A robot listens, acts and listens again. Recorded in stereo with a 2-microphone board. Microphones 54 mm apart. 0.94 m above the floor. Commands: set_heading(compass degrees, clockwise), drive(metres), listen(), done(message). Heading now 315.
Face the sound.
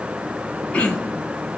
set_heading(290)
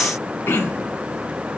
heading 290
set_heading(160)
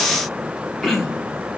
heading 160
done("Facing the throat clearing.")